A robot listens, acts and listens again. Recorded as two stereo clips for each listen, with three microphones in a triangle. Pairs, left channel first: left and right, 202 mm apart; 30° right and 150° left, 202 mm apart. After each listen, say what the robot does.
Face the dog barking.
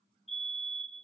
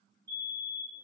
Keep listening.
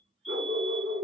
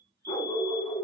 Turn 100° right.
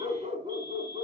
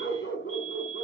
Turn 30° right.
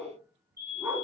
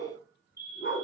Turn 10° right.
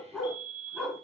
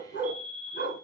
Facing the dog barking, 2 to 4 m away.